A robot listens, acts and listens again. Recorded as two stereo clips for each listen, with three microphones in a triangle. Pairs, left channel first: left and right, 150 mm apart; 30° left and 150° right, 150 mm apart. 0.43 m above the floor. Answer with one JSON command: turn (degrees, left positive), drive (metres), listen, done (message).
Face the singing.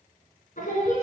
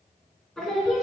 {"turn": 120}
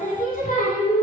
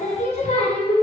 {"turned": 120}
{"turn": 75}
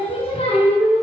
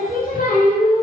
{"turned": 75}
{"turn": 50}
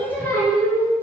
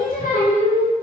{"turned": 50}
{"turn": 15}
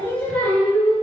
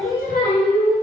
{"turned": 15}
{"turn": 10}
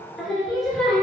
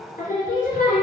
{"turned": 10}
{"done": "Facing the singing."}